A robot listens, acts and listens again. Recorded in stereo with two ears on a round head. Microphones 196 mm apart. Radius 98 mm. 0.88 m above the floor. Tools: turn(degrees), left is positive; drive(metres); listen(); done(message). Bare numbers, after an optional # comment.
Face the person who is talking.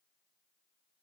listen()
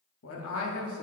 # The man speaking: about 70° left or 110° left.
turn(70)
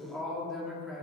done("Facing the man speaking.")